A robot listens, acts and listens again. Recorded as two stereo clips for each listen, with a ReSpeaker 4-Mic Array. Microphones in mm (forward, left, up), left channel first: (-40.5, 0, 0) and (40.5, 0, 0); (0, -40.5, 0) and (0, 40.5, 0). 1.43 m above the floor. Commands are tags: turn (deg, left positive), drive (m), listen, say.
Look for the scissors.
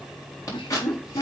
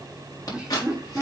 <turn deg="-135"/>
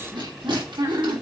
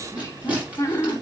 <listen/>
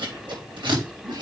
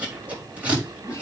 <turn deg="15"/>
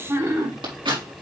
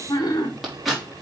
<say>Facing the scissors, over 4 m away.</say>